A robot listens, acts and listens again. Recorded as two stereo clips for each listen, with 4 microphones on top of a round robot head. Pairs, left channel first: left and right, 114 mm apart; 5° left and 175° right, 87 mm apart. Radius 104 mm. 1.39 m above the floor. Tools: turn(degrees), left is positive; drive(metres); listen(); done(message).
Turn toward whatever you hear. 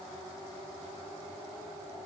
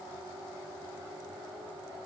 listen()
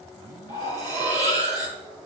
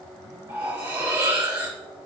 turn(degrees=-120)
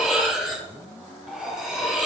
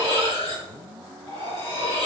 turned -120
turn(degrees=-10)
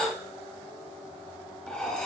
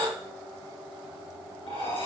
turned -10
done("Found it: cutlery clinking, straight ahead.")